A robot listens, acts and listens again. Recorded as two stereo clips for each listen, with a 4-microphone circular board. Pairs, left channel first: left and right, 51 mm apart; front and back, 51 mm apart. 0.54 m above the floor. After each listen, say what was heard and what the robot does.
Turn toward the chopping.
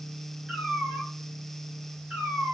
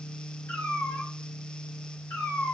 Keep listening.
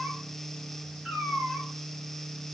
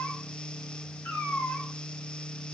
Keep listening.
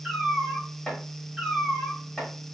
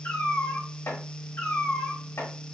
The chopping: 10° left. Turn 10° left.
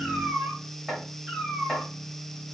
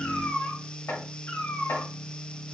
Found it: chopping, straight ahead.